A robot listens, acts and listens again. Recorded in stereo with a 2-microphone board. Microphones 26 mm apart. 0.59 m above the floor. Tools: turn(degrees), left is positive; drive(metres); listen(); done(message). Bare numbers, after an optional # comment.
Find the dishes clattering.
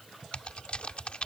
listen()
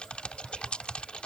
listen()
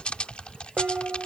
turn(-90)
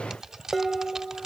done("Found it: dishes clattering, straight ahead.")